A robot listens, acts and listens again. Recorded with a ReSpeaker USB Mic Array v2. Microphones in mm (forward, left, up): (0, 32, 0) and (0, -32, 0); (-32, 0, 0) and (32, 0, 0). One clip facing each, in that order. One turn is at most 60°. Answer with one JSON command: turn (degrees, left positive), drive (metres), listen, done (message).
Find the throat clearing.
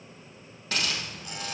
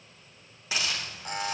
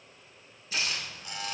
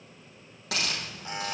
{"listen": true}
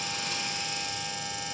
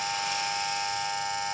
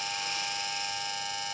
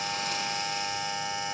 {"listen": true}
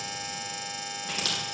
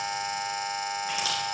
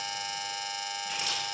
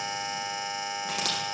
{"done": "I can't make out throat clearing, only a buzzer and a hiss."}